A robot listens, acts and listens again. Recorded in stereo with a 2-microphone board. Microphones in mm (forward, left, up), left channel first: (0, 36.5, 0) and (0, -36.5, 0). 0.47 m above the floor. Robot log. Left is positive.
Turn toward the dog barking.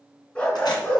note: The dog barking: about 20° left or 160° left.
cmd yaw +20
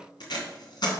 cmd idle
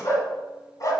note: So it is at 130° left.
cmd yaw +130
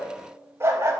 note: The dog barking is now 45° right.
cmd yaw -45
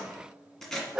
note: The dog barking is now 15° right.
cmd yaw -15
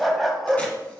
end: Facing the dog barking.